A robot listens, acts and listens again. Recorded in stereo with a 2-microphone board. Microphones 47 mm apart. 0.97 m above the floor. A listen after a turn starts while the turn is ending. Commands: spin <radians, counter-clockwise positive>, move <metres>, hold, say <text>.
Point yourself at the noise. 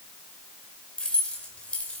spin 0.44
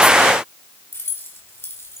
spin 2.09
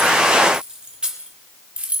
spin -0.44
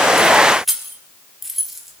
say Facing the keys jangling, 1 to 2 m away.